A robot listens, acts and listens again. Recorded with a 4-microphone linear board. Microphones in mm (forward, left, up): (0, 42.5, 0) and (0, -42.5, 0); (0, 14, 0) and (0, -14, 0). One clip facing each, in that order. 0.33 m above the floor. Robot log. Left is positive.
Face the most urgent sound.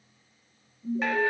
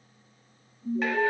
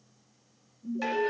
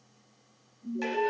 cmd yaw +30
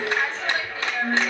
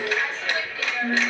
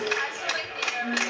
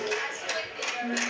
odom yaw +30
note: So it is at 30° right.
cmd yaw -30
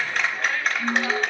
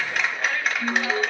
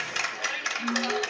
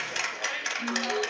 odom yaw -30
end: Facing the alarm, 1 to 2 m away.